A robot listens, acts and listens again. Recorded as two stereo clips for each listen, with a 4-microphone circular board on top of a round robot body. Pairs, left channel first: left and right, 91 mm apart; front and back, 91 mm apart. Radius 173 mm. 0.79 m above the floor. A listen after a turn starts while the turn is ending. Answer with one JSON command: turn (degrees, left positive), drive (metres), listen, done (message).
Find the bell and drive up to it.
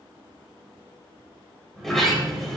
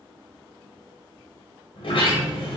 {"listen": true}
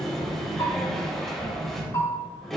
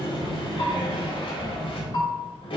{"turn": 40}
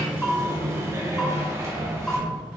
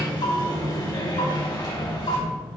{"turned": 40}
{"drive": 1.0}
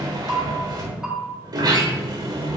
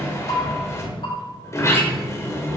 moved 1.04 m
{"drive": 1.0}
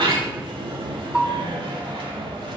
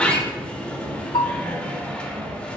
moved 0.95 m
{"turn": -15}
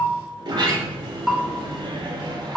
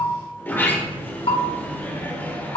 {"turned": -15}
{"drive": 1.0}
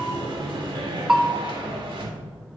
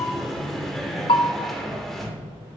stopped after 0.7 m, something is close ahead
{"turn": -10}
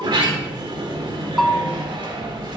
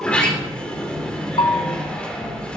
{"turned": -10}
{"done": "Arrived at the bell, straight ahead."}